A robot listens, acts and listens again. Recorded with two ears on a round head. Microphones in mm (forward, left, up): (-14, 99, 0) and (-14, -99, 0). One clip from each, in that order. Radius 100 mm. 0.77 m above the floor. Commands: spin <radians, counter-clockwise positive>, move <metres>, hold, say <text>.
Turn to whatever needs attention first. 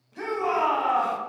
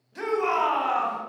spin -1.05
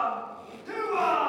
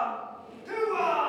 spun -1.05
say Found it: a shout, straight ahead.